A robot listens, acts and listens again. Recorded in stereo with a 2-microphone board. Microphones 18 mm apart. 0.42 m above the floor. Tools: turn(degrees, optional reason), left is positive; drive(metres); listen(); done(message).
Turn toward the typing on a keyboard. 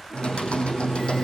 turn(degrees=90)
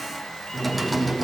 done("Found it: typing on a keyboard, straight ahead, over 4 m away.")